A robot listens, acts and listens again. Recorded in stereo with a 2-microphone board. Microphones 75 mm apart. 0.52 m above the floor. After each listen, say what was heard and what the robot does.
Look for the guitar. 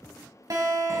The guitar: about 50° right or 130° right. Turn 50° right.
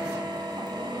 Keep listening.
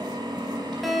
Facing the guitar.